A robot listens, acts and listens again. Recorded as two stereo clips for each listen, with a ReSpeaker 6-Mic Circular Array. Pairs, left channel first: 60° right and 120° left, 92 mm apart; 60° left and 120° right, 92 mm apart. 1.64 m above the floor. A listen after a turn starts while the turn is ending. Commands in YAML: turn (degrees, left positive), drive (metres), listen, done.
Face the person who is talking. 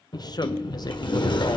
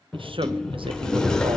turn: -105
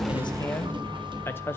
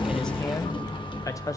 done: "Facing the man speaking, 1 to 2 m away."